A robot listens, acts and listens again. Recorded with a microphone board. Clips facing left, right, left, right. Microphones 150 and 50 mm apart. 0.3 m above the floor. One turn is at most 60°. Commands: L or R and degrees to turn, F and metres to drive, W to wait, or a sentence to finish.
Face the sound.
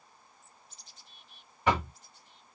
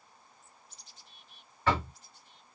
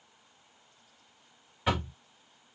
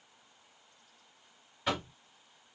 L15
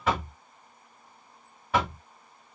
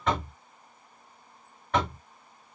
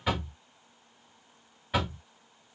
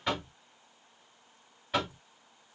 Found it: knocking, straight ahead, 1 to 2 m away.